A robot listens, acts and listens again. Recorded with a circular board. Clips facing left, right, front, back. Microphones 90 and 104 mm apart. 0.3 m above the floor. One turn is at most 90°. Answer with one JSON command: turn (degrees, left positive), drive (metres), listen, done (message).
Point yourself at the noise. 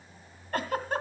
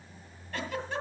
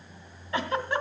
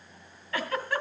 {"turn": 65}
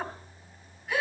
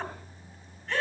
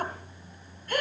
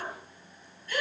{"turn": 10}
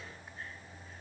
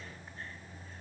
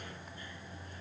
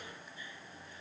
{"listen": true}
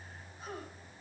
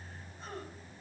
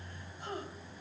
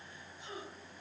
{"done": "Found it: a giggle, straight ahead."}